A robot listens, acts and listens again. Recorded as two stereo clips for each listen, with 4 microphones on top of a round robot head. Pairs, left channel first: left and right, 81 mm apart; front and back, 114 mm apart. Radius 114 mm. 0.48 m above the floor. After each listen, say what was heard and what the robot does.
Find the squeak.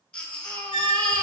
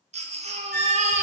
The squeak: 70° right. Turn 70° right.
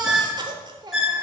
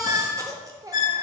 Facing the squeak, under 1 m away.